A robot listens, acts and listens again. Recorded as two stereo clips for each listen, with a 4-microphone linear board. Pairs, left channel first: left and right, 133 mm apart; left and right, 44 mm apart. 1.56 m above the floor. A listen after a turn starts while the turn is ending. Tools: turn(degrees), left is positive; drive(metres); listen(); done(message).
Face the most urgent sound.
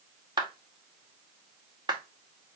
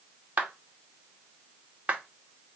listen()
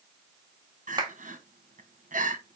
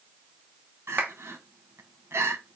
turn(degrees=-90)
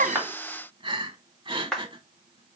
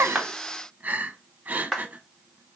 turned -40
turn(degrees=-35)
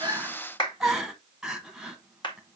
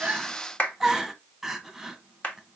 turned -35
done("Found it: crying, straight ahead, 1 to 2 m away.")